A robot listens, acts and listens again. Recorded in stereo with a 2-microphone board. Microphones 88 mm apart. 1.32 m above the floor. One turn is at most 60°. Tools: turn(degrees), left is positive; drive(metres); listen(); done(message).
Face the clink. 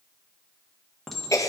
turn(degrees=30)
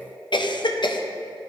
listen()
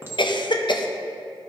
turn(degrees=-25)
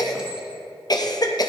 listen()
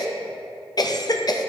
listen()
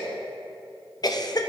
done("Facing where the clink came from. I can't hear it now.")